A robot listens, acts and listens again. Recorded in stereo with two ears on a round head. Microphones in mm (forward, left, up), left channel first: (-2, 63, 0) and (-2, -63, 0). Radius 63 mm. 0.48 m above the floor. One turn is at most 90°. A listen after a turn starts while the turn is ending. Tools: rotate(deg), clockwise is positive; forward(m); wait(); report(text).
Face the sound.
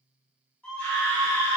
rotate(-30)
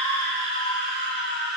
rotate(-90)
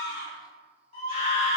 rotate(-50)
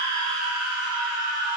rotate(10)
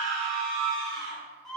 report("Facing the scream, 1 to 2 m away.")